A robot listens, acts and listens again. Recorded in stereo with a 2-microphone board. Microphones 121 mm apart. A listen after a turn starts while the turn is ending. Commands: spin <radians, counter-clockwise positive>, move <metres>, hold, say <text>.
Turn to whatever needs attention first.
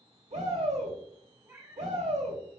spin -1.31
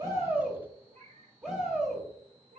spin -0.17
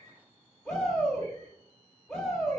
say Facing the shout, 2 to 4 m away.